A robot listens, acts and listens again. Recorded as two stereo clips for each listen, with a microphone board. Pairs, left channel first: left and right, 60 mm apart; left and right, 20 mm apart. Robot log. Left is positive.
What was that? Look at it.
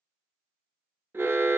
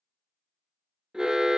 note: The alarm: about 40° right or 140° right.
cmd yaw -40
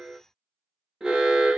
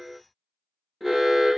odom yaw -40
note: So it is at 10° right.
cmd yaw -10
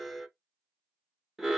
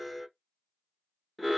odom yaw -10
end: Found it: an alarm, straight ahead, under 1 m away.